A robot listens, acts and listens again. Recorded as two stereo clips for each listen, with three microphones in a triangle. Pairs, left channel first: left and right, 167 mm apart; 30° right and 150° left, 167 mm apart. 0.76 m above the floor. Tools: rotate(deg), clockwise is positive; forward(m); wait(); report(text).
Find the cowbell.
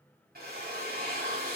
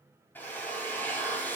wait()
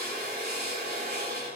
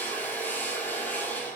wait()
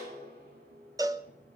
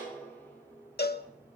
rotate(20)
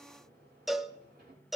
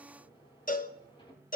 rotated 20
report("Facing the cowbell, under 1 m away.")